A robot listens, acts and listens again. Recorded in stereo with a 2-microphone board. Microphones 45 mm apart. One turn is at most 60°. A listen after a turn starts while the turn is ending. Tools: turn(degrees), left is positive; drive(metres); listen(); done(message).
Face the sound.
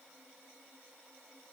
listen()
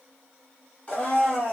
turn(degrees=30)
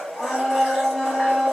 done("Found it: a blender, straight ahead, 1 to 2 m away.")